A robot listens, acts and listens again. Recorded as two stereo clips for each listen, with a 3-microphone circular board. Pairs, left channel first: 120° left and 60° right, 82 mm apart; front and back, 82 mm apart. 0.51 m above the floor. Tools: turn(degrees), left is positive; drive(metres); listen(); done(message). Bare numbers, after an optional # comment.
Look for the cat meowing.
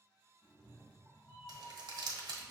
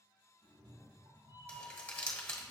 # The cat meowing: straight behind.
turn(180)
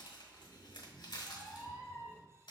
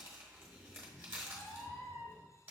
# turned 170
done("Found it: a cat meowing, straight ahead.")